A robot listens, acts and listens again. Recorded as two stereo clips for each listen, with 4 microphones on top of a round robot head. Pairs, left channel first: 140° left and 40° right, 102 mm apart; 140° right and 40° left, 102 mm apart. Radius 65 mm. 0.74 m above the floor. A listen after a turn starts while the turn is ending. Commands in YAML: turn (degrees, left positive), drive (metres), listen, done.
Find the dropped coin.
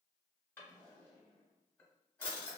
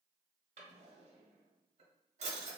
listen: true
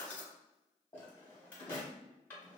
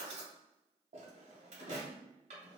listen: true
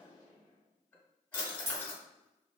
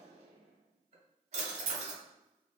turn: 10
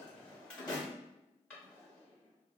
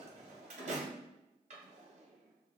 done: "I heard a dropped coin from this way, but can't make it out now."